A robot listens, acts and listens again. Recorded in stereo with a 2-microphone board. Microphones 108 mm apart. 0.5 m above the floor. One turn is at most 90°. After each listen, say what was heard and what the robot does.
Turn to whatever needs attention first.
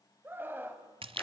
The scream: about 20° right or 160° right. Turn 20° right.
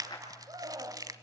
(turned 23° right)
So it is at 140° right. Turn 90° right.
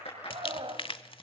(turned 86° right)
The scream is now 55° right. Turn 55° right.
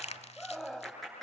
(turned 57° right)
Facing the scream.